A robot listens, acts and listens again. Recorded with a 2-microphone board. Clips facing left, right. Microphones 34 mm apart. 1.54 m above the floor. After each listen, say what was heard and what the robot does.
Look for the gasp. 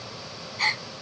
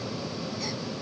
The gasp: about 70° left or 110° left. Turn 70° left.
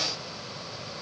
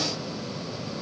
Keep listening.
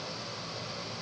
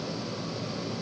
I heard a gasp, but can't make it out now. It was about straight ahead or 40° left.